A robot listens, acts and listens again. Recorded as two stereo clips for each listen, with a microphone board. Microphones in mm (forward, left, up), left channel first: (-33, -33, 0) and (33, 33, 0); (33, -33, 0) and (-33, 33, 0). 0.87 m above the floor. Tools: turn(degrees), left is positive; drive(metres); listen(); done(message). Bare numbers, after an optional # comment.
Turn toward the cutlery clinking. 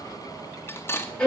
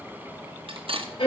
# The cutlery clinking: 160° left.
turn(160)
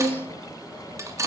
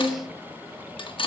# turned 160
# The cutlery clinking is now 15° right.
turn(-15)
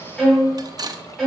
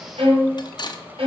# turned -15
done("Facing the cutlery clinking, under 1 m away.")